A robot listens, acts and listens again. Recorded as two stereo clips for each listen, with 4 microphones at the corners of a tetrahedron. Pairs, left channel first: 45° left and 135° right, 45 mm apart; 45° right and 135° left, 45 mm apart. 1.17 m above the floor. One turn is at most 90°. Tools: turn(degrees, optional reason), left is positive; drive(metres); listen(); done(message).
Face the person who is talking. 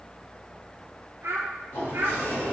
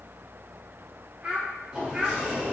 turn(degrees=-90, reason="The child speaking: 160° right.")
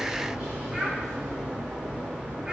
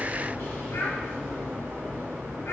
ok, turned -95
turn(degrees=-65, reason="Nothing new. It was at 65° right.")
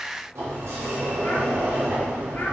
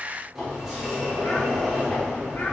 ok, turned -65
listen()
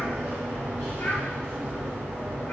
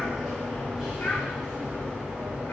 done("Facing where the child speaking came from. I can't hear it now.")